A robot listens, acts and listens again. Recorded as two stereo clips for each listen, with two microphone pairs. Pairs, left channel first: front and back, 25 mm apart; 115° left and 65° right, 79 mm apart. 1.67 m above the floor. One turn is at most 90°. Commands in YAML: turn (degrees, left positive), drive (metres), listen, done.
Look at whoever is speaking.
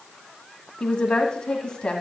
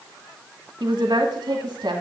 turn: -50
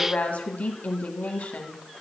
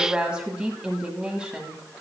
turn: 15
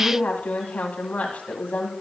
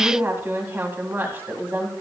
done: "Found it: a woman speaking, straight ahead, 1 to 2 m away."